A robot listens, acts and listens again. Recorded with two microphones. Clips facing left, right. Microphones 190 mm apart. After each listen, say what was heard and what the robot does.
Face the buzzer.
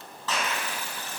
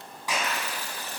The buzzer: about 40° right or 140° right. Turn 40° right.
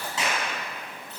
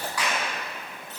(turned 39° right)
Keep listening.
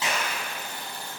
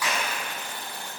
So it is at 105° right. Turn 105° right.
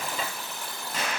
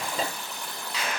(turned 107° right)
Found it: a buzzer, straight ahead, 2 to 4 m away.